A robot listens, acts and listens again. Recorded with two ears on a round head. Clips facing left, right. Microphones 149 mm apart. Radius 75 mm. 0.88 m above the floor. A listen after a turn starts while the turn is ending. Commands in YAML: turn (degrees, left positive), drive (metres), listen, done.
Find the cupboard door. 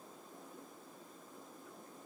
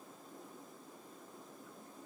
listen: true
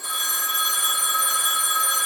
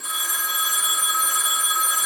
listen: true
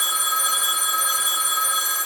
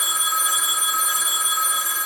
done: "I can't make out a cupboard door, only a phone ringing."